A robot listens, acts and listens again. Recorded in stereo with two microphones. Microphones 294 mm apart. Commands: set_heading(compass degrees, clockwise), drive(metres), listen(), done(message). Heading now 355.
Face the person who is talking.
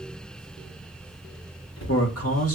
set_heading(300)
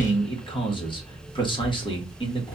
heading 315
set_heading(300)
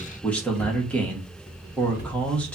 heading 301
done("Facing the man speaking, 1 to 2 m away.")